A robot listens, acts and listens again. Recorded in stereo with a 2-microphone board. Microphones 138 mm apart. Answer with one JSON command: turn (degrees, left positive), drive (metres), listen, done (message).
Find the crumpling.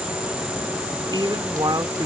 {"listen": true}
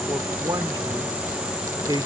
{"listen": true}
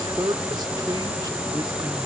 {"done": "I can't make out crumpling to turn to."}